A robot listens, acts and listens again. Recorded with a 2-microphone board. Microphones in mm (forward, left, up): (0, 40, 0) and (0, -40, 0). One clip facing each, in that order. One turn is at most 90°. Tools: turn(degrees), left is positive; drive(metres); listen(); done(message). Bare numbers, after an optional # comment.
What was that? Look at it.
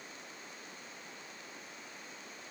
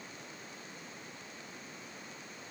listen()
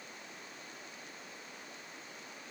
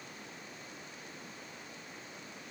listen()
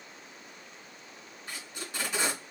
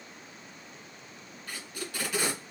# The tape being pulled: about 25° left or 155° left.
turn(25)
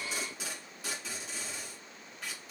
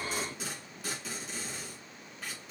done("Facing the tape being pulled.")